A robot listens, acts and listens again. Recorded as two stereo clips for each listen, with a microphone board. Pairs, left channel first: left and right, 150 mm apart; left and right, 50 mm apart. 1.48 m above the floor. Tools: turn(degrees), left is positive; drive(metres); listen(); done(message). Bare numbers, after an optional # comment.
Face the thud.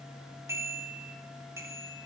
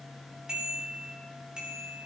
listen()
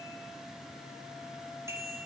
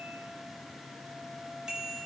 listen()
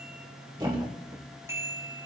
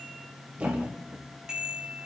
# The thud: about 35° right or 145° right.
turn(-35)
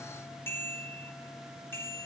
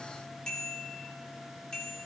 listen()
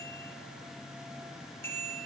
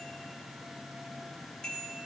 done("I heard a thud, but can't make it out now. It was about straight ahead or 110° right.")